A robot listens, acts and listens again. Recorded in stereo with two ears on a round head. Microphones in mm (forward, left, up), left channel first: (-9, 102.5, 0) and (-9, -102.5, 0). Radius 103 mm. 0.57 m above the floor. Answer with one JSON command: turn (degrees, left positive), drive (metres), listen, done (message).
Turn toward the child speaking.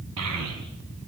{"turn": -90}
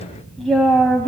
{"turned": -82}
{"turn": 10}
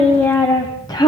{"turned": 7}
{"turn": 20}
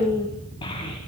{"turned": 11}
{"turn": 25}
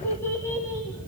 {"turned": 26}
{"turn": 15}
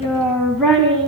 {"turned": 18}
{"done": "Facing the child speaking."}